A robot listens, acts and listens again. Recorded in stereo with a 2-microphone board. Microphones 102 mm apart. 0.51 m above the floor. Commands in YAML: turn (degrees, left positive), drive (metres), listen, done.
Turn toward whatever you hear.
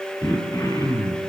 turn: 35
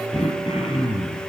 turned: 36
turn: 110
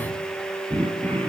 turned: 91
turn: 20
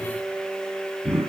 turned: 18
done: "Facing the throat clearing, over 4 m away."